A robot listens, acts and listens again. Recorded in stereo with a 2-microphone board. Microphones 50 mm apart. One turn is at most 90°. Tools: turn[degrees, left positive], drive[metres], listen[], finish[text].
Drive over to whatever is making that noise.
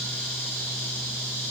Action: listen[]
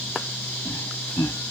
Action: turn[90]
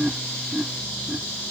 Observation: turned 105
Thought: So it is at 25° right.
Action: turn[-25]
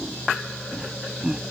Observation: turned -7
Thought: The laughter is now 15° right.
Action: turn[-15]
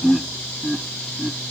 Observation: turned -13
Action: drive[1.0]
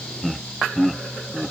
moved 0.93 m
Action: drive[1.0]
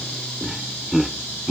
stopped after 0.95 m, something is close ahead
Action: finish[I am next to the laughter.]